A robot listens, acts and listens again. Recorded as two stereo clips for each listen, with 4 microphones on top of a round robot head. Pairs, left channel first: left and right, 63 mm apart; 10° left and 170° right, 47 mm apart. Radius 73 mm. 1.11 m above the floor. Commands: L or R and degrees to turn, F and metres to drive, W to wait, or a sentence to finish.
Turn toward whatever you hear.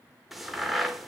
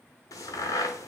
Found it: a crack, straight ahead, 1 to 2 m away.